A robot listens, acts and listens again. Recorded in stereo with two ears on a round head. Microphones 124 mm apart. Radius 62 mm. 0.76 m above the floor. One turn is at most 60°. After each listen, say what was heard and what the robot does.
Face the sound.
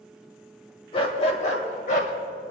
The dog barking: about 60° left or 120° left. Turn 60° left.
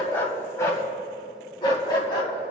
So it is at 35° left. Turn 35° left.
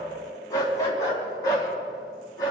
The dog barking is now 30° left. Turn 30° left.
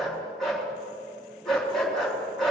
Found it: a dog barking, straight ahead, 2 to 4 m away.